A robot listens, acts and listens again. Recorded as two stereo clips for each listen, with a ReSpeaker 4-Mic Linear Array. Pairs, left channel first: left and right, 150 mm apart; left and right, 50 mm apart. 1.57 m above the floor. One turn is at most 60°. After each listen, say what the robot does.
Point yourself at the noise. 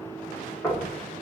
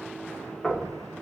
Turn 15° left.
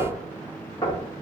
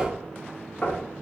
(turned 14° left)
Turn 60° left.
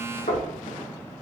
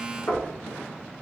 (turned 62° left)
Turn 60° left.
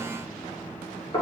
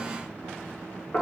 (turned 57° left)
Turn 30° left.
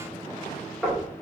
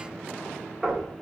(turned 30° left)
Facing the knocking, 1 to 2 m away.